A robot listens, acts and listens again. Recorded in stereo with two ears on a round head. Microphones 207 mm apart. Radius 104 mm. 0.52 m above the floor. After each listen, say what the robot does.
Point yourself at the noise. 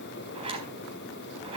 Turn 25° right.
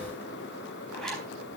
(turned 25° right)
Facing the zipper, over 4 m away.